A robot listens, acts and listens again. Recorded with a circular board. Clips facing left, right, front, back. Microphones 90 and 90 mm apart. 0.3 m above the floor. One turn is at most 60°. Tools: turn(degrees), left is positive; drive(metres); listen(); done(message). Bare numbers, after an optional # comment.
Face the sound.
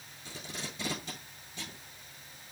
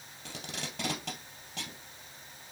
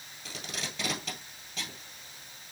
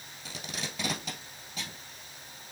# The tape being pulled: 95° right.
turn(-60)
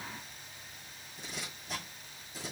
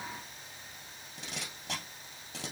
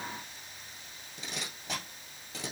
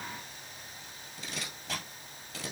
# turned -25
# The tape being pulled is now 70° right.
turn(-60)
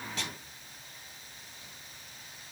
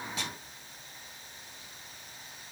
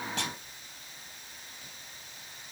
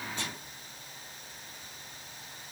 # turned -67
done("Found it: tape being pulled, straight ahead.")